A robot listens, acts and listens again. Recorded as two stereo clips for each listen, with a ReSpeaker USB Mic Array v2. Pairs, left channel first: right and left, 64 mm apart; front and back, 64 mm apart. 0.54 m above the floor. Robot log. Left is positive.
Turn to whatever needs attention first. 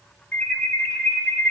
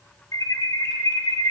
note: The alarm: 20° right.
cmd yaw -20
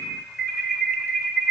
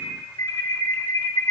end: Found it: an alarm, straight ahead, 1 to 2 m away.